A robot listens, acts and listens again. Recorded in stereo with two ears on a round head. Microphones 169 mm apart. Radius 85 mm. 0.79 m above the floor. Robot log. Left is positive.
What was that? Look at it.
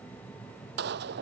note: The gunshot: about 60° right or 120° right.
cmd yaw -60
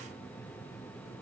cmd idle
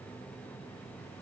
end: I heard a gunshot, but can't make it out now. It was about straight ahead or 60° right.